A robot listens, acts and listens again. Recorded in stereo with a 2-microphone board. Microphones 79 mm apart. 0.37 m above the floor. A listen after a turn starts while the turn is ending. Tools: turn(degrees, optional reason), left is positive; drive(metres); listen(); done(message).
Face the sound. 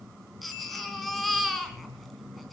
turn(degrees=30)
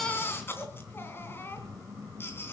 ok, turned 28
turn(degrees=150, reason="So it is at 150° left.")
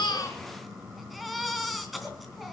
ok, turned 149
done("Facing the baby crying.")